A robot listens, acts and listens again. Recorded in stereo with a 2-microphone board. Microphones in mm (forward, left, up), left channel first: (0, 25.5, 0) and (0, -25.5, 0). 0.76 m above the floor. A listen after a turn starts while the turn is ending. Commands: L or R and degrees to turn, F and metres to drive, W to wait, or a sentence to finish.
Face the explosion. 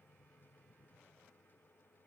W
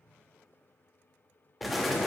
L30
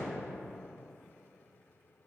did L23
W
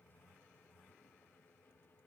I heard an explosion, but can't make it out now. It was about 25° right or 160° left.